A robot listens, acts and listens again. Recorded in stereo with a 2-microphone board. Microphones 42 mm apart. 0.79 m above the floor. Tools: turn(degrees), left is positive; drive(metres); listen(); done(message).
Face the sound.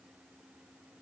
listen()
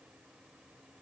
listen()
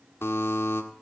turn(degrees=75)
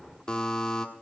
turn(degrees=15)
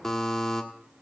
turn(degrees=10)
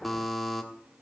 done("Found it: a buzzer, straight ahead, 1 to 2 m away.")